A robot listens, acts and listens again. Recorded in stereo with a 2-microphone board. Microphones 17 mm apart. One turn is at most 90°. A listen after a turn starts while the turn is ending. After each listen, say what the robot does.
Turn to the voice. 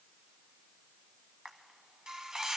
Keep listening.
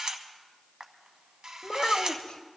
Turn 60° left.
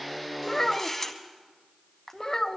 Turn 40° left.
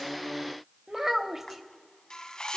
Turn 25° right.
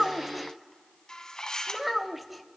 Found it: a child speaking, straight ahead, under 1 m away.